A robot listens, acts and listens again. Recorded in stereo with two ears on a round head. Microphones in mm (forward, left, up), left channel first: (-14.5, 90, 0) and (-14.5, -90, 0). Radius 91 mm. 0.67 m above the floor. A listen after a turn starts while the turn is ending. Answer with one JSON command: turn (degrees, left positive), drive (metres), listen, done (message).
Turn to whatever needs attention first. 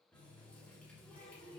{"listen": true}
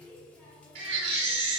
{"turn": -65}
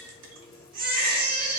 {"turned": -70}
{"turn": -45}
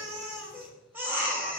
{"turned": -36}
{"turn": -10}
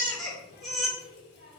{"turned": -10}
{"done": "Found it: a baby crying, straight ahead."}